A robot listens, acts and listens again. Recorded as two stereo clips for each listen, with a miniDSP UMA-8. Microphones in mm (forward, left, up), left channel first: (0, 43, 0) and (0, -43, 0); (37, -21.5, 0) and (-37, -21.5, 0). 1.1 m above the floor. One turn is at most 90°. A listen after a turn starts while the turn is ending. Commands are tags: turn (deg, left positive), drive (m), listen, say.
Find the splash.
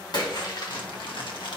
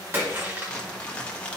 <turn deg="90"/>
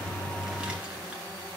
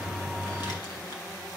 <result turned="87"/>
<turn deg="35"/>
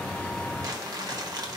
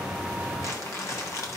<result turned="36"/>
<say>I heard a splash from this way, but can't make it out now.</say>